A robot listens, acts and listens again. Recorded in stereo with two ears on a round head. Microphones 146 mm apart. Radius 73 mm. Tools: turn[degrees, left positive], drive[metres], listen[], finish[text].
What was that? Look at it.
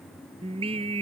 Thought: The singing: about 35° right or 145° right.
Action: turn[-35]
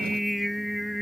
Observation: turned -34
Action: finish[Facing the singing.]